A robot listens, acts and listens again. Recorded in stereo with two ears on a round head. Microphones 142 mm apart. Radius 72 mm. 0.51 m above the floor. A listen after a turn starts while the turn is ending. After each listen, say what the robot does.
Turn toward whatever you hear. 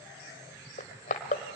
Turn 50° left.
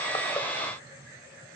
Keep listening.
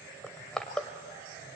Facing the crushing.